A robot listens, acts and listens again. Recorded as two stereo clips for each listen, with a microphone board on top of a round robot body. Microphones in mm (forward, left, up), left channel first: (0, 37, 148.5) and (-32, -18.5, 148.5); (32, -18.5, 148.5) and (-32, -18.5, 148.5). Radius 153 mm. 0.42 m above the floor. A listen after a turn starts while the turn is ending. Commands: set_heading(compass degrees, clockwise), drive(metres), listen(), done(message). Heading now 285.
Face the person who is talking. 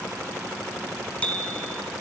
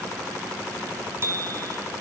listen()
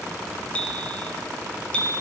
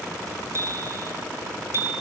listen()
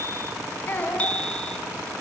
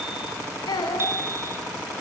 done("Found it: a child speaking, straight ahead.")